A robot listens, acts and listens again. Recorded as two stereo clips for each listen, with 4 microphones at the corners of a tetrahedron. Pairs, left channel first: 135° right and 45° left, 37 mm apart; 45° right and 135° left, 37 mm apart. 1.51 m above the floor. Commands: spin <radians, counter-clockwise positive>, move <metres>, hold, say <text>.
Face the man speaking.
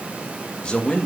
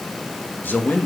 spin -1.22
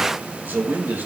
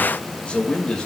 spin 0.35
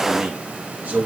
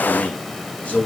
say Facing the man speaking.